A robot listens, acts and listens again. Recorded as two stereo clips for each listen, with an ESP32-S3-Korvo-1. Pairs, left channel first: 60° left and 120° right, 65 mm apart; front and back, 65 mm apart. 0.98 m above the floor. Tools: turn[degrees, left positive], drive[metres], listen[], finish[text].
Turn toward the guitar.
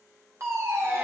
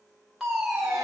Action: listen[]
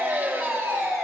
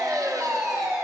Action: listen[]
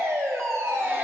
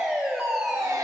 Action: finish[I can't make out a guitar to turn to.]